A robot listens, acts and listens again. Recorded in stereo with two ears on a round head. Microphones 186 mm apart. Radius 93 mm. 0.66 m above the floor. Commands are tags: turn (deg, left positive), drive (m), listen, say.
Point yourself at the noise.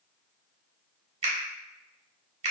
<turn deg="-30"/>
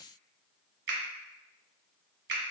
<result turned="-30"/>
<turn deg="-115"/>
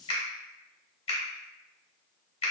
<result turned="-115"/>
<turn deg="30"/>
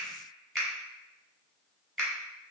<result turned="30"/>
<say>Found it: a finger snap, straight ahead.</say>